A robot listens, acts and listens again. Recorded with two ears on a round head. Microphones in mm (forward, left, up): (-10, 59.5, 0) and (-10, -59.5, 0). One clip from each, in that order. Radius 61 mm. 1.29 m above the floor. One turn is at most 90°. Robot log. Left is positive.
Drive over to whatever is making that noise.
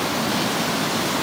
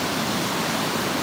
cmd idle
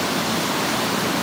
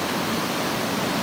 cmd idle
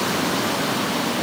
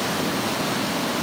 end: I can't make out anything.